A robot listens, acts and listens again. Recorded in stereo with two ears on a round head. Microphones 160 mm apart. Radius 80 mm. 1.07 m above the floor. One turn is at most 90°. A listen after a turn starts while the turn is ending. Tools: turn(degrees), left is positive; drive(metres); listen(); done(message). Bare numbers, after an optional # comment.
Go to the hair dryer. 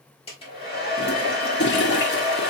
# The hair dryer: about 30° left or 150° left.
turn(30)
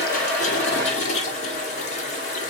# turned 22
# So it is at 10° left.
turn(10)
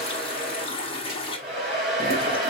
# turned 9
drive(1.0)
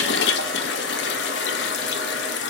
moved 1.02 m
listen()
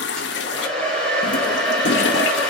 drive(1.0)
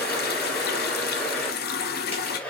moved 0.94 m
# The hair dryer is now 10° left.
turn(10)
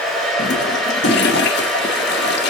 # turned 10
drive(1.0)
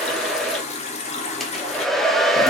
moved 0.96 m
drive(1.0)
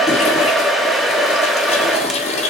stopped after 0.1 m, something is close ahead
done("Arrived at the hair dryer, straight ahead.")